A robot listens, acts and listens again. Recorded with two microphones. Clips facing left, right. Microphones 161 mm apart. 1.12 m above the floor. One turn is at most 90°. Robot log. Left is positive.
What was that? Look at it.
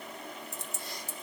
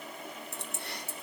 note: The keys jangling: about 65° right or 115° right.
cmd yaw -65
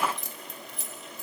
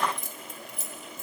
note: So it is at 50° right.
cmd yaw -50
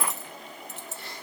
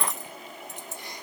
note: The keys jangling is now 15° right.
cmd yaw -15
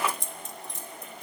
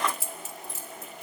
end: Found it: keys jangling, straight ahead.